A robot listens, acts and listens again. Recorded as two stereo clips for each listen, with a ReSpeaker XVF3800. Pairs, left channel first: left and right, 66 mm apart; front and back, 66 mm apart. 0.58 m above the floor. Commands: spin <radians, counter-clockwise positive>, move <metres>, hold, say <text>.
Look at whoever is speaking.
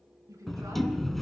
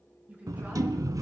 spin -2.01
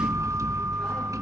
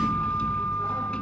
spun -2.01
hold
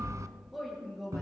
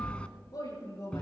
say Found it: a woman speaking, straight ahead.